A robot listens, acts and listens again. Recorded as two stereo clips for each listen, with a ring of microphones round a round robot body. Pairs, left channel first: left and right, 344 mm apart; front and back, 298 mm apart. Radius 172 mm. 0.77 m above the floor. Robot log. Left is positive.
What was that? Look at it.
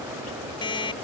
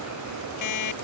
note: The alarm clock: 15° left.
cmd yaw +15
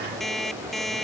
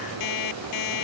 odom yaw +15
end: Facing the alarm clock.